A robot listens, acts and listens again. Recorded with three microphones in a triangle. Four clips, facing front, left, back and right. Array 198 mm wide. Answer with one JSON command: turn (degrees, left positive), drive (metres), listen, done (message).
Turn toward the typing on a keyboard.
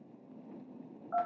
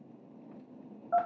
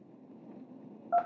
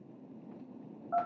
{"listen": true}
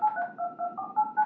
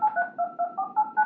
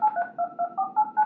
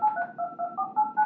{"listen": true}
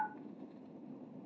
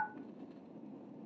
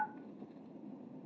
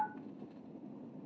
{"done": "I can't make out typing on a keyboard to turn to."}